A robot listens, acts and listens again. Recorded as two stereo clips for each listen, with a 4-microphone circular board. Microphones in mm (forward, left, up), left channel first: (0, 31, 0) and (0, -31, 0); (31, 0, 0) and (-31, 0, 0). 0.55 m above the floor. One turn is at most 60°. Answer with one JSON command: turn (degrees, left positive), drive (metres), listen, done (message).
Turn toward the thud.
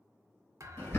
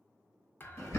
{"turn": -55}
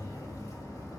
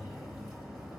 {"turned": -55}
{"done": "Facing where the thud came from. I can't hear it now."}